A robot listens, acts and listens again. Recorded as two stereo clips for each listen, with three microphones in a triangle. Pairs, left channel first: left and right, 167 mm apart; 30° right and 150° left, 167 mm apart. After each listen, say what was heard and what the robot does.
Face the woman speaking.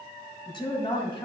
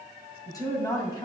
The woman speaking: 30° left. Turn 30° left.
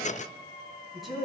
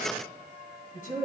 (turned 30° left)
Facing the woman speaking, 2 to 4 m away.